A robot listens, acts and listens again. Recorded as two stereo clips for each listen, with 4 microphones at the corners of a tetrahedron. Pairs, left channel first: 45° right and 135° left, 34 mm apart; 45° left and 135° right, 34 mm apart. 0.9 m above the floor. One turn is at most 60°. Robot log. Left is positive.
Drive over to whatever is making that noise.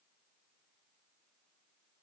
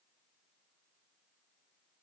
cmd idle
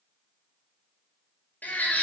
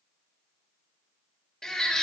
note: The baby crying: 30° right.
cmd yaw -30
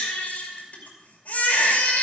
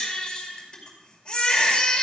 note: The baby crying is now 20° right.
cmd yaw -20
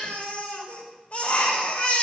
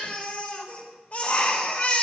cmd fwd 1.0
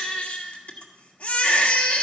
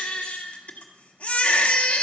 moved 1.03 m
cmd fwd 1.0
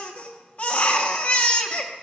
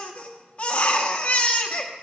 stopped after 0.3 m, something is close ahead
end: I am next to the baby crying.